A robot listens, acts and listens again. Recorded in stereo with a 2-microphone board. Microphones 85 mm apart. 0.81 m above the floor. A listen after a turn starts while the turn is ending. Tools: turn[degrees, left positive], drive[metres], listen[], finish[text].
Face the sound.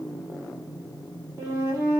Thought: The flute: about 30° right or 150° right.
Action: turn[-30]
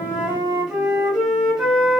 Thought: So it is at 10° right.
Action: turn[-10]
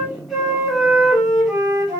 Action: finish[Facing the flute, 1 to 2 m away.]